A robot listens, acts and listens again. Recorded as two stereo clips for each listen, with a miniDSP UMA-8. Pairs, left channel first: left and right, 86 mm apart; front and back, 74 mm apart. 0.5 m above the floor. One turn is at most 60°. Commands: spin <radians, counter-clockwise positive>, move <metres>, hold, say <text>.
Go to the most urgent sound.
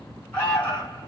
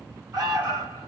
spin 1.05
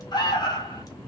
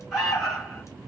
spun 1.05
spin 1.05
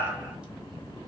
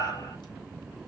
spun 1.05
spin 0.52
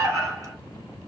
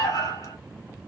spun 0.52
move 1.0
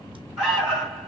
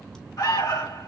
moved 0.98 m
spin -0.17
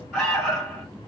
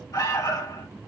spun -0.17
move 1.0
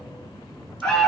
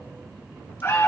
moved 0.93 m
spin 0.17
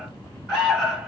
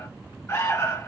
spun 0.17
move 1.0
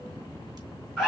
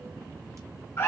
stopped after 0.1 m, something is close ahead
say I am next to the alarm.